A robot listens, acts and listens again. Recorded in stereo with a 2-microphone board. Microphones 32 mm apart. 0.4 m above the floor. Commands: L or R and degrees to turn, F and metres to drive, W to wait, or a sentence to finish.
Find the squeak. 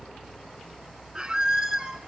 R30
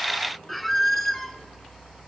Facing the squeak.